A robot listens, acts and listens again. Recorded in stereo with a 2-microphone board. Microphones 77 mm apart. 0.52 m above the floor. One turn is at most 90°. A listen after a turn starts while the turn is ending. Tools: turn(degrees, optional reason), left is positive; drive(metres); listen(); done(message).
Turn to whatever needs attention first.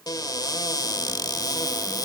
listen()
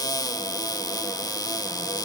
listen()
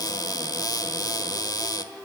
done("I can't make out anything urgent to turn to.")